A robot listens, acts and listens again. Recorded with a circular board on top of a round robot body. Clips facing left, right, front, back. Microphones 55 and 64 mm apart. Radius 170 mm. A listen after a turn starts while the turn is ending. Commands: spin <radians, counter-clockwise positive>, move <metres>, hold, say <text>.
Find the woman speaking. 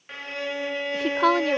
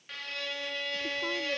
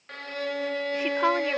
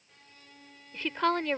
spin 1.40
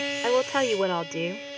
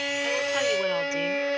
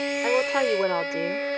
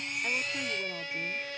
spin 0.35
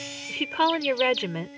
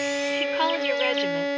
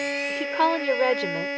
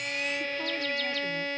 spin 0.17
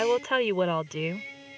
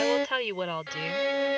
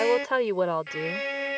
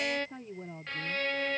spin 0.26
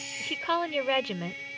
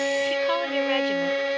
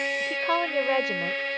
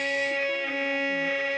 say Found it: a woman speaking, straight ahead.